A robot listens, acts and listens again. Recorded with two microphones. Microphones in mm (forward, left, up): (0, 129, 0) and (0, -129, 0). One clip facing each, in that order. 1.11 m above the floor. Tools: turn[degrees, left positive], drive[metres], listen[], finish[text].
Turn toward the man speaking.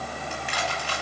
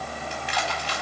Action: listen[]
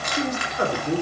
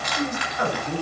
Thought: The man speaking: about 50° left or 130° left.
Action: turn[50]
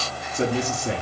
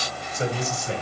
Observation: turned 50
Thought: So it is at 70° left.
Action: turn[70]
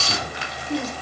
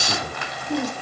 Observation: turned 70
Thought: The man speaking is now 15° right.
Action: turn[-15]
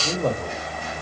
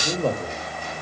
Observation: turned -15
Action: finish[Found it: a man speaking, straight ahead.]